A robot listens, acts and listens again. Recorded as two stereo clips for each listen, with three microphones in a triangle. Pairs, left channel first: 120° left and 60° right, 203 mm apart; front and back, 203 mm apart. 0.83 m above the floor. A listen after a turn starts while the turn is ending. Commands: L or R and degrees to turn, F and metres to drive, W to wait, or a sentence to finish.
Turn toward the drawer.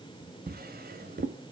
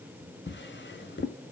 R20
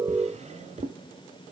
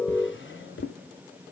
Facing the drawer.